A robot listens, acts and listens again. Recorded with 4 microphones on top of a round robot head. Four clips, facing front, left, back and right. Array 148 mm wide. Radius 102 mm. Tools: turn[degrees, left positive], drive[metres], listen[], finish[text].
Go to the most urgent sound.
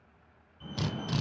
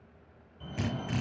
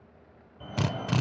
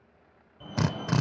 Thought: The fire alarm: 160° right.
Action: turn[-160]
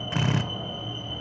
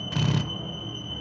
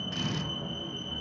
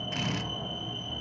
Thought: The fire alarm is now 15° right.
Action: turn[-15]
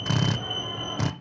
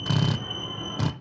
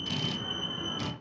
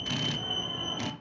Action: drive[1.0]
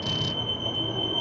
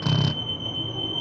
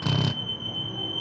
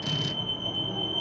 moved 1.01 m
Action: drive[1.0]
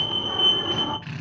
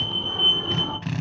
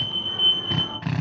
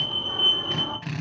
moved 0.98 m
Action: drive[1.0]
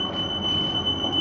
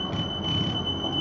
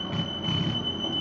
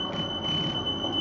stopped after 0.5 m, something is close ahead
Action: finish[I am next to the fire alarm.]